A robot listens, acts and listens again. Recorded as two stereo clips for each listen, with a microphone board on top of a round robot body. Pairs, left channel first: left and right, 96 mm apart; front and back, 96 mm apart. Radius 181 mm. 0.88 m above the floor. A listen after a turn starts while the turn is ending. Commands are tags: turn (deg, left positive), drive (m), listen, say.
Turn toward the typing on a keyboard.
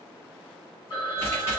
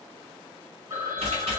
<turn deg="155"/>
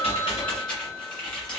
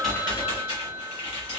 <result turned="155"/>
<turn deg="10"/>
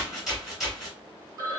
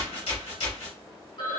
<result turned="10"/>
<say>Facing the typing on a keyboard.</say>